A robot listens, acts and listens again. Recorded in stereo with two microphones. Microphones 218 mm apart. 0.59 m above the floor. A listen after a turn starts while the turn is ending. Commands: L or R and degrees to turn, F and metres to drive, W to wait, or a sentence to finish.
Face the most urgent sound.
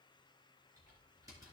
W
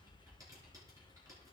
W
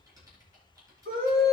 R75
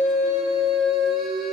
Found it: a scream, straight ahead.